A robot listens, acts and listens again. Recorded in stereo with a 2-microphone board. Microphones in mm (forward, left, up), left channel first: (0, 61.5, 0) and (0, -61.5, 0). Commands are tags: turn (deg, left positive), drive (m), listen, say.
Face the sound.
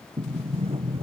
<turn deg="-50"/>
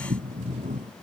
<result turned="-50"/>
<turn deg="-80"/>
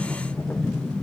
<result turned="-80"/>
<turn deg="20"/>
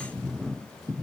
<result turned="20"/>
<say>Found it: a sliding door, straight ahead.</say>